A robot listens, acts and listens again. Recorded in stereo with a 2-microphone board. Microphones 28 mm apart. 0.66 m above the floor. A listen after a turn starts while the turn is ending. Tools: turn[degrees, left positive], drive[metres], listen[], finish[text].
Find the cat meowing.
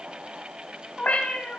Thought: The cat meowing: about 50° left or 130° left.
Action: turn[50]
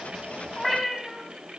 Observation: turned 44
Action: finish[Found it: a cat meowing, straight ahead, 2 to 4 m away.]